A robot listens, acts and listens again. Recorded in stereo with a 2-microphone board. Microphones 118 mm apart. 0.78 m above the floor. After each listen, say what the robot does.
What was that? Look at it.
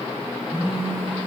Turn 20° right.
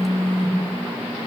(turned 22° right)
Turn 145° right.
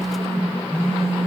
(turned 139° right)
Found it: a phone buzzing, straight ahead, 2 to 4 m away.